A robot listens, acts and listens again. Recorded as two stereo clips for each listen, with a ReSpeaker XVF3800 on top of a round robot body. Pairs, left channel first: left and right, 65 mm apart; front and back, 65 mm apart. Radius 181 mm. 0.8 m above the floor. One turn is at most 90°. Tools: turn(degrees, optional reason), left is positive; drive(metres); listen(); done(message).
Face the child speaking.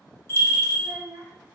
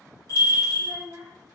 turn(degrees=-90, reason="The child speaking: 150° right.")
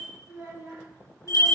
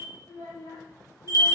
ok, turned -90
turn(degrees=-30, reason="The child speaking is now 30° right.")
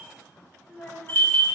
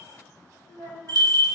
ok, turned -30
turn(degrees=25, reason="The child speaking is now 25° left.")
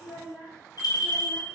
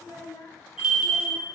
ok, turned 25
done("Found it: a child speaking, straight ahead, 1 to 2 m away.")